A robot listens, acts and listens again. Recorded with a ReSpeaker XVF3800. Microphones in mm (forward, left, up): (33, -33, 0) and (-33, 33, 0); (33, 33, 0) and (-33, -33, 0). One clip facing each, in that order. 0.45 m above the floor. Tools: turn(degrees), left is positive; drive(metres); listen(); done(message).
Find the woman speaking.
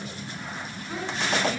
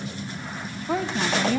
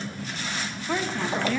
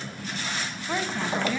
turn(degrees=145)
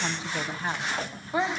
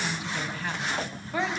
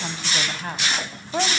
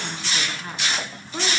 turn(degrees=25)
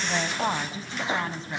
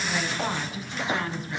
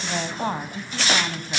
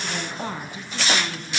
turn(degrees=15)
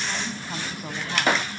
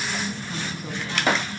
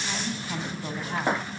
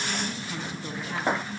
listen()
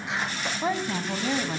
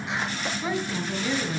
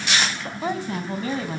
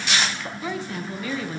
done("Facing the woman speaking, 2 to 4 m away.")